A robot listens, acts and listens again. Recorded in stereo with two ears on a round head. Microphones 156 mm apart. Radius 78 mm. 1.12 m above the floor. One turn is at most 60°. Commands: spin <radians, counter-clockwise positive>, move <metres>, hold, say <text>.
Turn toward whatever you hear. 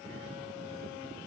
hold
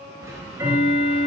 spin -0.26
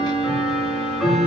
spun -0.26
say Found it: ticking, straight ahead.